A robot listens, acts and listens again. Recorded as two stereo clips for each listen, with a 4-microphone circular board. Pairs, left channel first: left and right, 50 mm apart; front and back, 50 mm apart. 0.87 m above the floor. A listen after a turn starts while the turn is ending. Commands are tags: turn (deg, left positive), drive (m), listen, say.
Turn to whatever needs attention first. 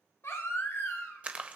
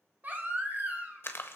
<turn deg="125"/>
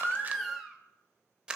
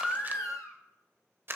<say>Facing the baby crying, 1 to 2 m away.</say>